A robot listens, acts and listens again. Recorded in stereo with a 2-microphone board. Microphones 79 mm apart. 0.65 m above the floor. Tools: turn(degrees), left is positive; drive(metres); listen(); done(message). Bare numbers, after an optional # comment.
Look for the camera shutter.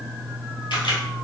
turn(90)
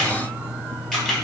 done("Found it: a camera shutter, straight ahead, 2 to 4 m away.")